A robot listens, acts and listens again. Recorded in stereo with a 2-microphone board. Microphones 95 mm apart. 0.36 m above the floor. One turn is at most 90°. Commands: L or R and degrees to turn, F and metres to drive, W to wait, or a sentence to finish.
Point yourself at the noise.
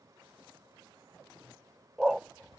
R30
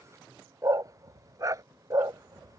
R90
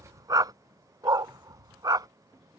R40
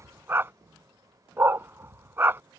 R25
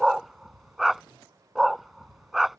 Facing the dog barking.